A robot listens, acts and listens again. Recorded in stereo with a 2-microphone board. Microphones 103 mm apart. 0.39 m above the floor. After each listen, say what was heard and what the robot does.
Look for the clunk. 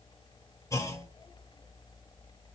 The clunk: about 30° left or 150° left. Turn 30° left.
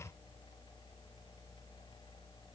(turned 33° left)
Keep listening.
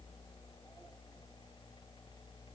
I heard a clunk, but can't make it out now. It was about 5° right or 115° left.